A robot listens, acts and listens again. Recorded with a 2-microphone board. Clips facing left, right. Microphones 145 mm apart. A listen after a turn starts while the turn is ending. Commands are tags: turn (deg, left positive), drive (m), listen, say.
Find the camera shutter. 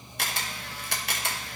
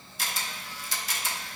<turn deg="65"/>
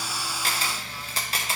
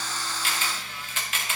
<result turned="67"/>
<turn deg="40"/>
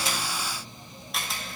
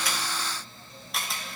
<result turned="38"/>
<say>Found it: a camera shutter, straight ahead, 1 to 2 m away.</say>